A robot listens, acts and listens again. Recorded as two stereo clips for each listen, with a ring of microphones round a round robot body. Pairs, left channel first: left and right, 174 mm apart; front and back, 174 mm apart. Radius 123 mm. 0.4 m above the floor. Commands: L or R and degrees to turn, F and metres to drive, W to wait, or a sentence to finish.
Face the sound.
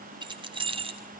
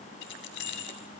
R30
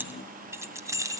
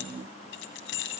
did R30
R20
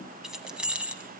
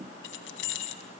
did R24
Facing the keys jangling.